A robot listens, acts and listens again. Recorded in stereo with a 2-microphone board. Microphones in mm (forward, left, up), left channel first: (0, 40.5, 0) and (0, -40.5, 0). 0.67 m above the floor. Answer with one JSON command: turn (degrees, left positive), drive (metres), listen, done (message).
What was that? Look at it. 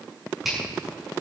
{"turn": 30}
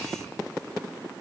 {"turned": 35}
{"listen": true}
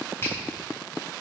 {"turn": 150}
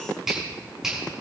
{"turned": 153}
{"done": "Facing the finger snap."}